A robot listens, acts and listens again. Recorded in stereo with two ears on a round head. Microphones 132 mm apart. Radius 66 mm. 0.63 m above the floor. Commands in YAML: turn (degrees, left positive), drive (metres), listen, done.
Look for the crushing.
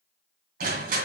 turn: -60
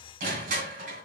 turn: -60
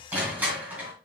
turn: -10
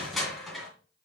done: "Found it: crushing, straight ahead."